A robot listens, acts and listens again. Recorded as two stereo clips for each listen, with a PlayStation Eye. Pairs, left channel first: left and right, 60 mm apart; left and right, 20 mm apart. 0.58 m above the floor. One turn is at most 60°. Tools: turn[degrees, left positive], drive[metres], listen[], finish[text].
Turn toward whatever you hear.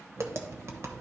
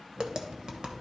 Thought: The tapping: about 50° right or 130° right.
Action: turn[-50]
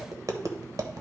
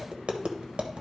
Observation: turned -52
Thought: So it is at 80° right.
Action: turn[-60]
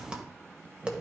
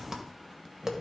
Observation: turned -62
Thought: The tapping is now 15° right.
Action: turn[-15]
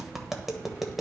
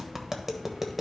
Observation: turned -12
Action: finish[Found it: tapping, straight ahead.]